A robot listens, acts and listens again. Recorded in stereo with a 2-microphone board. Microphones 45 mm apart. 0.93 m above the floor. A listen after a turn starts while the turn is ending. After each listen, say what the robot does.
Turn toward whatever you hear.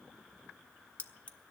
Turn 30° left.
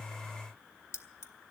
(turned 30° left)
Turn 115° left.
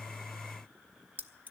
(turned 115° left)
Turn 40° right.
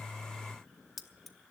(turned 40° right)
Found it: keys jangling, straight ahead, under 1 m away.